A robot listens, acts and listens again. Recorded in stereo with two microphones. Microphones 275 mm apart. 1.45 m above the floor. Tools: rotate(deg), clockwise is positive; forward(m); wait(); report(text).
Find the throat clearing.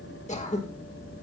rotate(-25)
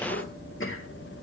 rotate(-130)
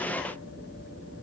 wait()
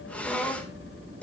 report("Found it: throat clearing, straight ahead.")